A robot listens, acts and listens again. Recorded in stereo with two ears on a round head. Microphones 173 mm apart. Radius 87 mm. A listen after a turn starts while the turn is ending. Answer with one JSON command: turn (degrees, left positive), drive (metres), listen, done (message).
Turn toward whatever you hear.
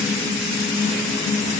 {"listen": true}
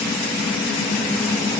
{"listen": true}
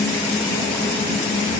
{"done": "I can't make out anything."}